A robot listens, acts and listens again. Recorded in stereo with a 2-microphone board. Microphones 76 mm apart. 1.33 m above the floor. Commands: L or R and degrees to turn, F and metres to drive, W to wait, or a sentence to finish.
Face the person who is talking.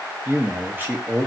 R30
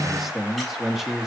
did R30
Found it: a man speaking, straight ahead.